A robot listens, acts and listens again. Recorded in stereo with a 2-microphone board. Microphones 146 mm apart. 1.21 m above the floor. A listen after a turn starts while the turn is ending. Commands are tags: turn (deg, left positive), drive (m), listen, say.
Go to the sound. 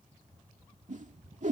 <turn deg="-55"/>
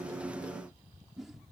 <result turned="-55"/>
<drive m="1.0"/>
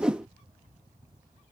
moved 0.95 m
<drive m="1.0"/>
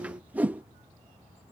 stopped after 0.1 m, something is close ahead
<turn deg="-10"/>
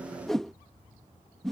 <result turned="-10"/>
<say>Arrived at the whoosh, straight ahead.</say>